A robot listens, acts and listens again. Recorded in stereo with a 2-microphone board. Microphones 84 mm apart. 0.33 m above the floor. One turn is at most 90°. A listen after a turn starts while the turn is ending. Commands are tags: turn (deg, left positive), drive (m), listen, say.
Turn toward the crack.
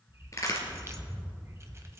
<turn deg="35"/>
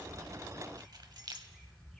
<listen/>
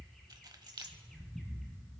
<say>I heard a crack, but can't make it out now. It was about straight ahead or 110° left.</say>